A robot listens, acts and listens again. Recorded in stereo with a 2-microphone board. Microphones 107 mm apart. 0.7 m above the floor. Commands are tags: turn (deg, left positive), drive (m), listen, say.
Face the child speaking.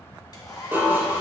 <listen/>
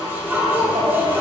<turn deg="-65"/>
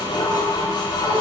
<listen/>
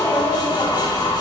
<say>Found it: a child speaking, straight ahead, 2 to 4 m away.</say>